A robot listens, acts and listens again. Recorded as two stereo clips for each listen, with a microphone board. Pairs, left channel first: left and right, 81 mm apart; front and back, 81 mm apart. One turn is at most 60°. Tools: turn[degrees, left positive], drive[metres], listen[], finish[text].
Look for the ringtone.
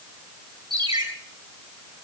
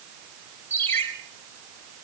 Thought: The ringtone: 60° right.
Action: turn[-60]
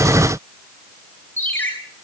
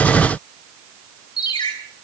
Thought: The ringtone is now 25° left.
Action: turn[25]
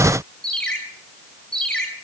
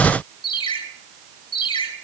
Thought: The ringtone is now 10° left.
Action: turn[10]
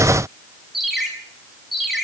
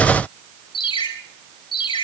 Action: finish[Found it: a ringtone, straight ahead, over 4 m away.]